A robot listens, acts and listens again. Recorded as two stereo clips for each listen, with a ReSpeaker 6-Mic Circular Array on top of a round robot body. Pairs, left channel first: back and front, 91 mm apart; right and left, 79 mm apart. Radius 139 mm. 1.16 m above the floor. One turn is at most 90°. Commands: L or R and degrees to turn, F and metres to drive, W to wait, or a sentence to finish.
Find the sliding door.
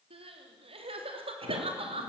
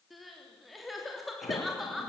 R35
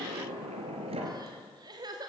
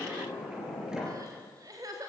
Facing the sliding door.